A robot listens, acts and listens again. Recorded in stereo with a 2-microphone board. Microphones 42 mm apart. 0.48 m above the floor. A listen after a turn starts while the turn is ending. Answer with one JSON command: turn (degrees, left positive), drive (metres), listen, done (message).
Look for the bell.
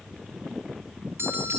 {"turn": -90}
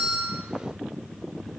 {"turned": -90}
{"listen": true}
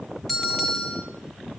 {"done": "Found it: a bell, straight ahead."}